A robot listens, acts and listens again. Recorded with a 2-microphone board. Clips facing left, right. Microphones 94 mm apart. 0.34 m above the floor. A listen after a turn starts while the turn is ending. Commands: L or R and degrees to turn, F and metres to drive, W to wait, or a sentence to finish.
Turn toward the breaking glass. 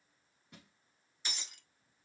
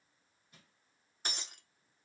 R50
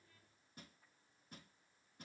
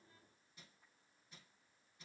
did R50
W
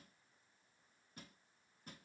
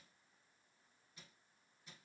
I heard breaking glass, but can't make it out now. It was about straight ahead or 80° right.